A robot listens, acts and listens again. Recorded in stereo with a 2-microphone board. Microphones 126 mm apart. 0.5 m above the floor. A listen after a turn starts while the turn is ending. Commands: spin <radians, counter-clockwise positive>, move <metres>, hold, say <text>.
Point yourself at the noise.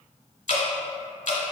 spin 1.22
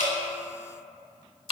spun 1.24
spin 0.70
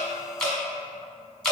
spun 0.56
say Facing the dripping, under 1 m away.